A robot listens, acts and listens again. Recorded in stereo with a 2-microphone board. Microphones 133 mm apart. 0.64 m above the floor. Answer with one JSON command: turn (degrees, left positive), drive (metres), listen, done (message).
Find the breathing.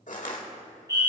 {"listen": true}
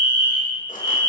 {"listen": true}
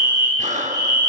{"turn": -60}
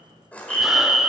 {"listen": true}
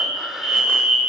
{"listen": true}
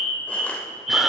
{"done": "I heard breathing, but can't make it out now. It was about straight ahead or 60° right."}